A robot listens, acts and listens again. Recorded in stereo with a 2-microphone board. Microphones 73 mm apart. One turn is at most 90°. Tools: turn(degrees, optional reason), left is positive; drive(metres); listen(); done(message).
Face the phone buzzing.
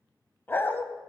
listen()
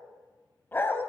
listen()
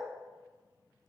done("I can't make out a phone buzzing to turn to.")